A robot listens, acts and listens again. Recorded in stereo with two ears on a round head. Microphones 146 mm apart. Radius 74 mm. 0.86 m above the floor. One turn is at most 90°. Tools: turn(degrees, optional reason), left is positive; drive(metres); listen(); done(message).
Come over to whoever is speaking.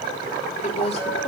turn(degrees=40, reason="The woman speaking: about 40° left or 140° left.")
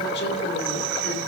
listen()
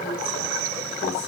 listen()
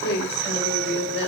turn(degrees=90, reason="So it is at 100° left.")
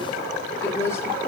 turn(degrees=15, reason="The woman speaking is now 15° left.")
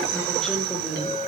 drive(metres=1.0)
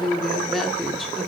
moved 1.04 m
drive(metres=1.0)
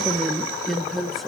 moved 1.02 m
drive(metres=1.0)
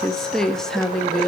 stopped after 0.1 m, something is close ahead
done("I am next to the woman speaking.")